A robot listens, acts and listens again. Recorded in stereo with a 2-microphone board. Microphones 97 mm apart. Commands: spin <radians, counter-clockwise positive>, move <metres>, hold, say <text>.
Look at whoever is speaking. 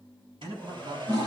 spin -1.22
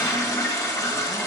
hold
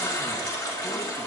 hold
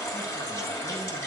say I heard a man speaking, but can't make it out now. It was about straight ahead or 40° right.